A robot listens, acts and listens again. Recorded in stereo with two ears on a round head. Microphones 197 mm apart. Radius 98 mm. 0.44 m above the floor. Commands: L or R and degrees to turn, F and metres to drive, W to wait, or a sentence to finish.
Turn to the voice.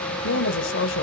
L60
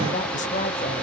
L40
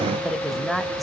Found it: a woman speaking, straight ahead.